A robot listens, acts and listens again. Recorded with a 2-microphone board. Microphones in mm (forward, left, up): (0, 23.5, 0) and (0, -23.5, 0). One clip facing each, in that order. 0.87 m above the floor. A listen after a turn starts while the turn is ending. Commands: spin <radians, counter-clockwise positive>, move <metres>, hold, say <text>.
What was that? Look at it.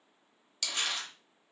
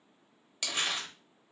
spin -0.52
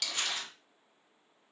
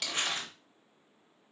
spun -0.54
spin -2.36
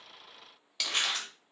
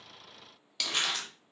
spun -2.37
say Found it: crumpling, straight ahead.